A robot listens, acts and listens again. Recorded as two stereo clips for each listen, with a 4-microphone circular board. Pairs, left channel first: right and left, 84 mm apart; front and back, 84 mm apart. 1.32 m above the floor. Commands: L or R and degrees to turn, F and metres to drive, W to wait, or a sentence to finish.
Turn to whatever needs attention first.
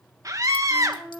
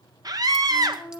L140
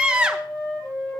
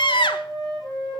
L10
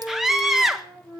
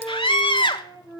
Facing the scream, 1 to 2 m away.